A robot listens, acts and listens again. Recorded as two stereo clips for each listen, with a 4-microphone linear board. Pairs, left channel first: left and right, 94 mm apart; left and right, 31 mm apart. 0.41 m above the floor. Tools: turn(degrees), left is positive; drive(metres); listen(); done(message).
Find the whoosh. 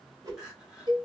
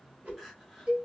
turn(degrees=-40)
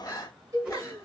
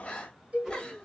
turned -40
turn(degrees=-10)
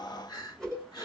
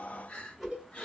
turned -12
done("Facing the whoosh.")